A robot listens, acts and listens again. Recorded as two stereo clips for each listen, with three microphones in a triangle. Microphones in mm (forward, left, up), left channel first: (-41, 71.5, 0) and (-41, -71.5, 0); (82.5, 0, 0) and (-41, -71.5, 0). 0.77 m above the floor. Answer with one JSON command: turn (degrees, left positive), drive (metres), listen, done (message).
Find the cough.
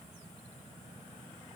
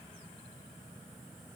{"listen": true}
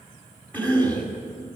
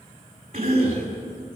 {"turn": 170}
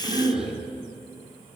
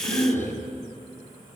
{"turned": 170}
{"turn": -45}
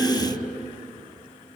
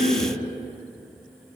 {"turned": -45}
{"done": "Found it: a cough, straight ahead."}